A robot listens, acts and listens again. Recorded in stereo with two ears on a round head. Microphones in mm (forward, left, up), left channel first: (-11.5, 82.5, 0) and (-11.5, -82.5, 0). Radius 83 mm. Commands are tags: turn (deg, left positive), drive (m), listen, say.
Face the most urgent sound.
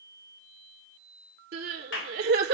<turn deg="-60"/>
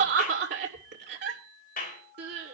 <turn deg="-60"/>
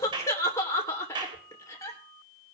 <turn deg="15"/>
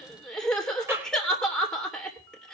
<say>Facing the crying, 2 to 4 m away.</say>